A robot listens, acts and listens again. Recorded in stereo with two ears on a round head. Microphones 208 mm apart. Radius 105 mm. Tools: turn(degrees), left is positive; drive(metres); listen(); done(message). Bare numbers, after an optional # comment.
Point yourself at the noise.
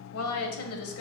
# The woman speaking: about 65° left or 115° left.
turn(65)
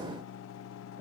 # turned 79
# So it is at 10° right.
turn(-10)
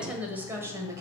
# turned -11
# The woman speaking is now 15° right.
turn(-15)
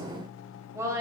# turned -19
# The woman speaking is now 15° right.
turn(-15)
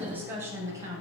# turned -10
# The woman speaking is now 15° right.
turn(-15)
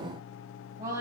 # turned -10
# The woman speaking is now 15° right.
turn(-15)
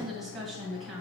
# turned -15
done("Facing the woman speaking, 2 to 4 m away.")